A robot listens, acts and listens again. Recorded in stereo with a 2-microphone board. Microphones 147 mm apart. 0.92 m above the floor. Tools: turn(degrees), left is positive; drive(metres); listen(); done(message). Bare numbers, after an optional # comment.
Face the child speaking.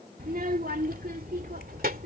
turn(-90)
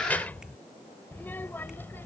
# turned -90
# So it is at 15° left.
turn(15)
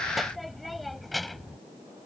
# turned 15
done("Found it: a child speaking, straight ahead.")